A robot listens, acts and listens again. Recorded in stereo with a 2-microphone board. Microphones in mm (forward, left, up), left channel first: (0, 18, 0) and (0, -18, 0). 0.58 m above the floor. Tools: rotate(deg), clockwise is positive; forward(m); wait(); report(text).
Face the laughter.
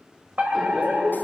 rotate(-30)
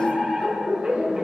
rotate(40)
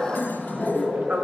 report("Facing the laughter, over 4 m away.")